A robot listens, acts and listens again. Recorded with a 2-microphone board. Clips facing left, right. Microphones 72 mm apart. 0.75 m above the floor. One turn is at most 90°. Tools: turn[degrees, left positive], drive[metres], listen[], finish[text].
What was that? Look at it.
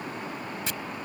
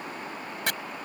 Thought: The chopping: about 65° right or 115° right.
Action: turn[-65]
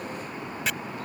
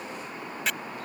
Action: finish[Found it: chopping, straight ahead.]